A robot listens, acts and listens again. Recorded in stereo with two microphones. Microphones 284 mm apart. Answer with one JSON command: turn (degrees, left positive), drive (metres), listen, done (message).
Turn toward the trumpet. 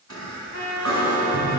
{"turn": 65}
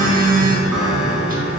{"listen": true}
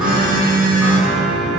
{"listen": true}
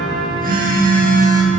{"done": "I heard a trumpet, but can't make it out now. It was about straight ahead or 50° left."}